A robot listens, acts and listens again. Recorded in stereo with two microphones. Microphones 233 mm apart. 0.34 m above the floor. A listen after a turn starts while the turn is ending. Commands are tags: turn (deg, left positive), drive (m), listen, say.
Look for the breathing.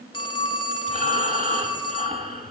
<turn deg="-30"/>
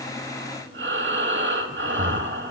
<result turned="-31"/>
<turn deg="-115"/>
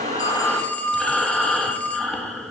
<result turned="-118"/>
<say>Facing the breathing, under 1 m away.</say>